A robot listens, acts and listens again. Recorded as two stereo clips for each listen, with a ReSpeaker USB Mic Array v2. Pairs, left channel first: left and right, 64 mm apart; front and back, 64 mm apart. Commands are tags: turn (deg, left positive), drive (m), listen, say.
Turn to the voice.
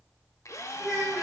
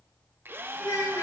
<say>Found it: a child speaking, straight ahead, over 4 m away.</say>